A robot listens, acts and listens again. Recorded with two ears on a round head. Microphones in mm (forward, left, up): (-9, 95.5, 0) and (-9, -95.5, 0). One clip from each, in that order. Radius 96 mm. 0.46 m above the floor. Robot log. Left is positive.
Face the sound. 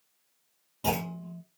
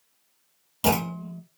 cmd yaw -90
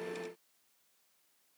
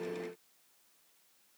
end: Facing where the clunk came from. I can't hear it now.